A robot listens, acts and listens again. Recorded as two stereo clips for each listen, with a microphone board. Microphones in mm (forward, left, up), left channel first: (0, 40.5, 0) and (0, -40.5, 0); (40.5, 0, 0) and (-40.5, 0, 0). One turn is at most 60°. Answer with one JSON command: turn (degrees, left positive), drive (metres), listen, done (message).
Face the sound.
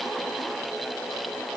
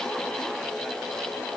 {"listen": true}
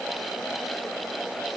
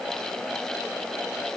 {"listen": true}
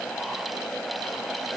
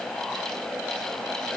{"done": "I can't make out anything to turn to."}